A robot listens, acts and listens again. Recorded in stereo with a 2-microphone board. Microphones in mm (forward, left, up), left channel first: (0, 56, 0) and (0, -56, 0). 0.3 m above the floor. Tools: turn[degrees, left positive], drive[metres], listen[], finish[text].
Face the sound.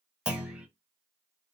Action: turn[-30]
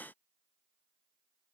Action: listen[]
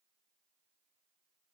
Action: finish[I heard a clunk, but can't make it out now. It was about 20° left or 140° right.]